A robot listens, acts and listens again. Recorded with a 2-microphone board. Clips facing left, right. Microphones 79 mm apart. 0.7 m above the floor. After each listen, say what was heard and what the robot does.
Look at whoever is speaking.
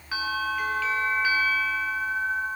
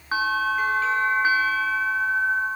Keep listening.
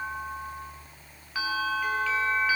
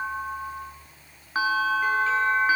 Keep listening.
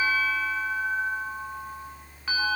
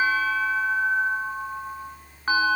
I can't make out anyone speaking, only a bell.